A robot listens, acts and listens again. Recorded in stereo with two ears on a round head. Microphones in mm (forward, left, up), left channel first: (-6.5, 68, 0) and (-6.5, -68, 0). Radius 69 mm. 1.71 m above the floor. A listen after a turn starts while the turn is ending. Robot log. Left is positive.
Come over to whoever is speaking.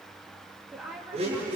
cmd yaw -30
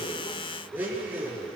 cmd idle
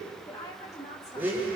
note: So it is at 25° left.
cmd yaw +25
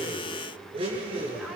cmd idle
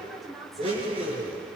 cmd fwd 1.0
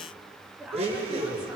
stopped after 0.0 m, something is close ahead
end: Something is in my way. I am facing the woman speaking but have not reached it.